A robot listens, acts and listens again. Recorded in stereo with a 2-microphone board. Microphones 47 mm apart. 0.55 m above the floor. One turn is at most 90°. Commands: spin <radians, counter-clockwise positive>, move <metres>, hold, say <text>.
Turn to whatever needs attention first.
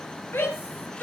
spin 1.05
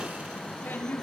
spin 0.96
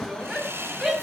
say Found it: a shout, straight ahead.